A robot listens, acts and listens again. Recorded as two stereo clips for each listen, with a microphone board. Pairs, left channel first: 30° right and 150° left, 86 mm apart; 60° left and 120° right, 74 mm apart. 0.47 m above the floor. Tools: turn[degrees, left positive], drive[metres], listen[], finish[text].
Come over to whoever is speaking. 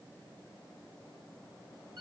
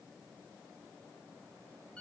Action: listen[]
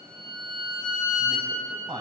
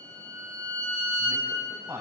Thought: The man speaking: 175° right.
Action: turn[-175]
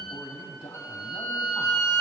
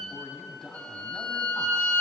Thought: The man speaking is now 40° right.
Action: turn[-40]
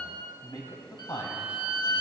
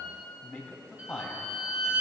Action: drive[1.0]
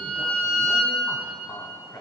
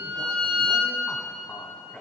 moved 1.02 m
Action: drive[1.0]
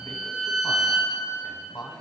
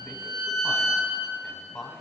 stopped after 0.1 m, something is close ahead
Thought: The man speaking is now 15° right.
Action: turn[-15]
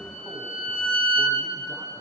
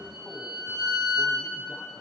Action: listen[]
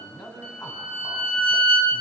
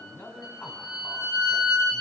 Action: finish[I am next to the man speaking.]